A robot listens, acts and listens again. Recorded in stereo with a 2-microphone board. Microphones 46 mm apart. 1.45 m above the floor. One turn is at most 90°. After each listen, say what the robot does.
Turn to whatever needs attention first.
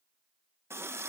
Keep listening.
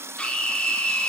Turn 25° left.
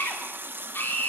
Turn 90° left.
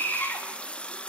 Turn 50° left.
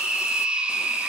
Turn 20° right.
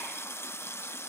Keep listening.
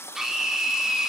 Facing the scream.